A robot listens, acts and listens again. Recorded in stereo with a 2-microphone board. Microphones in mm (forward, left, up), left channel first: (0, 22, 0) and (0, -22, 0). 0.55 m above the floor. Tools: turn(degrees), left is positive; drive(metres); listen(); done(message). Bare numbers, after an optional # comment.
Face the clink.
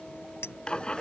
turn(90)
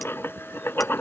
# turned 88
listen()
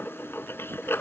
listen()
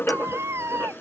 done("I heard a clink from this way, but can't make it out now.")